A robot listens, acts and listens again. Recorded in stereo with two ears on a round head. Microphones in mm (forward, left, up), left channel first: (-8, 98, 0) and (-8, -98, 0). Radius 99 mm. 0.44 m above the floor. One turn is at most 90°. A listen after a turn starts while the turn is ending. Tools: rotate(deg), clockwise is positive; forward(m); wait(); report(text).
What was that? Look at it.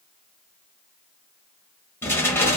rotate(-30)
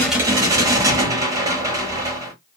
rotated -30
rotate(15)
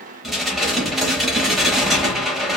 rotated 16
report("Found it: dishes clattering, straight ahead, 1 to 2 m away.")